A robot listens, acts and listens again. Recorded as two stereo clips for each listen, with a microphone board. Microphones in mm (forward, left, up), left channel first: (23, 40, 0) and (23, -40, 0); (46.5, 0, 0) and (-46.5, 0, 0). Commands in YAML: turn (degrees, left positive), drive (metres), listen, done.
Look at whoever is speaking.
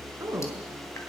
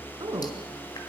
turn: -145
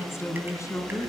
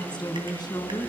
turn: 40
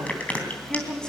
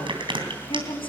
turn: 10
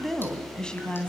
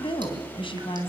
turn: 15
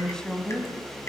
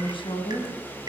turn: 15
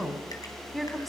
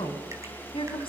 done: "Found it: a woman speaking, straight ahead."